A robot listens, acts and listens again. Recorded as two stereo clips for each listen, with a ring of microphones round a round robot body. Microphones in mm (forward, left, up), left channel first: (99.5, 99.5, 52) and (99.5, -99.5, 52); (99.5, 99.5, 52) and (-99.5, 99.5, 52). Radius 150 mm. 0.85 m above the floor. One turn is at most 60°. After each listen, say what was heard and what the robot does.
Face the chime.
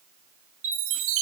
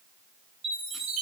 The chime: 110° right. Turn 60° right.
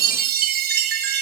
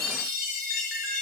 The chime is now 60° right. Turn 60° right.
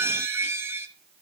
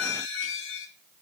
The chime is now 15° right. Turn 15° right.
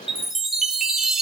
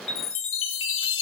Found it: a chime, straight ahead, 1 to 2 m away.